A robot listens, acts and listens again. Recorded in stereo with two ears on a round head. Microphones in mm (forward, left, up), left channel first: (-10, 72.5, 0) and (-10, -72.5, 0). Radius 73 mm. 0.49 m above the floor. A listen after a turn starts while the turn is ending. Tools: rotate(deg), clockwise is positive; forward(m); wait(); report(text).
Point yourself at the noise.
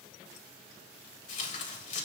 rotate(-50)
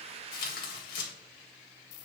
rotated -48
rotate(-75)
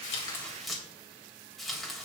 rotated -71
report("Found it: tearing paper, straight ahead.")